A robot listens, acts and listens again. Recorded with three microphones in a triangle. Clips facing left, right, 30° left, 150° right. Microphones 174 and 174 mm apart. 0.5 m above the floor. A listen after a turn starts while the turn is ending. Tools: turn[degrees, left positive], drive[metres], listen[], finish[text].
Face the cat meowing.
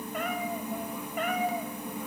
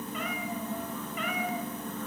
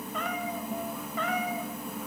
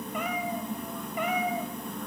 Thought: The cat meowing: 135° left.
Action: turn[135]
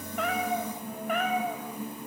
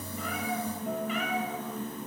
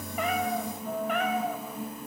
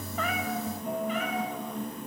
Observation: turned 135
Thought: The cat meowing is now 60° left.
Action: turn[60]
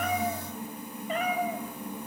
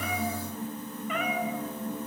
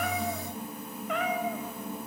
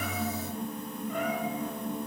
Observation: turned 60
Thought: The cat meowing is now 40° left.
Action: turn[40]
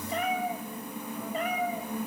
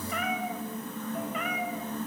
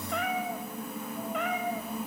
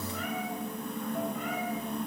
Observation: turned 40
Thought: The cat meowing is now 35° left.
Action: turn[35]
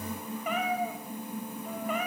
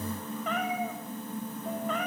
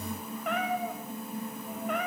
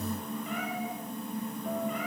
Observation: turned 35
Thought: The cat meowing is now 10° left.
Action: turn[10]
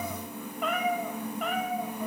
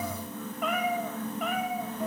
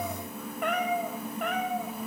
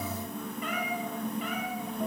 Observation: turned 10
Action: finish[Facing the cat meowing.]